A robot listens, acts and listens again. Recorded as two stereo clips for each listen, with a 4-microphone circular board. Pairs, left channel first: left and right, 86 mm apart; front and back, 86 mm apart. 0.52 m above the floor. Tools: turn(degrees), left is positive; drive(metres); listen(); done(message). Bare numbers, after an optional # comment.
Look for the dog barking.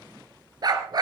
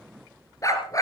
# The dog barking: 50° right.
turn(-50)
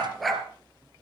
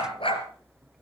done("Found it: a dog barking, straight ahead.")